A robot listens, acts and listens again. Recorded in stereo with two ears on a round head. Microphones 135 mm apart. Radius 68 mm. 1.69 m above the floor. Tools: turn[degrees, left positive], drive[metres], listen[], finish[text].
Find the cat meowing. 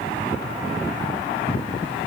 Action: listen[]
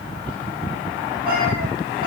Action: listen[]
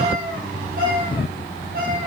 Thought: The cat meowing: about 65° right or 115° right.
Action: turn[-65]
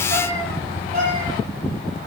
Thought: So it is at 50° right.
Action: turn[-50]
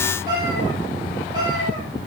Thought: The cat meowing is now 25° right.
Action: turn[-25]
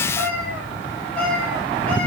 Thought: The cat meowing is now 10° left.
Action: turn[10]
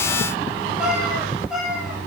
Action: finish[Facing the cat meowing.]